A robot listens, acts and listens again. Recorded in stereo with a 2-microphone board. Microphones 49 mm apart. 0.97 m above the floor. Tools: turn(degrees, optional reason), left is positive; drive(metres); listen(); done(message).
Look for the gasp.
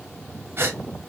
turn(degrees=-50, reason="The gasp: about 50° right or 130° right.")
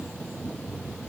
listen()
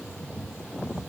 done("I heard a gasp, but can't make it out now. It was about straight ahead or 80° right.")